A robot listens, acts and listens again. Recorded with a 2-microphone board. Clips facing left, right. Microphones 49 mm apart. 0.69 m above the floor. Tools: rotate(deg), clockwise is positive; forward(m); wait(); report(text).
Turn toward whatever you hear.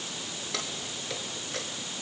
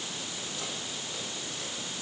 rotate(-90)
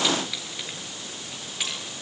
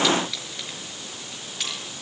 rotate(-10)
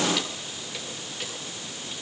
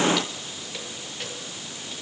report("Facing the keys jangling.")